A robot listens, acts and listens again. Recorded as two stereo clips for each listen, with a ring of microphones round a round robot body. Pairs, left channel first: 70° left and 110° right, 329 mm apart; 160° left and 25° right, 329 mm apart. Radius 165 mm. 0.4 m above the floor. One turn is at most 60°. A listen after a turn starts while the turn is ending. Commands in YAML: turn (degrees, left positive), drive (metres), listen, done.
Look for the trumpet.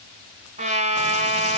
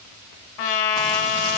turn: 60
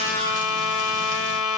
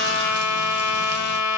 turn: 60
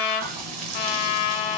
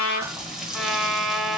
turn: 60
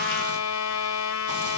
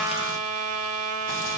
turn: 25
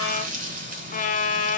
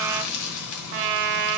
done: "Facing the trumpet, 1 to 2 m away."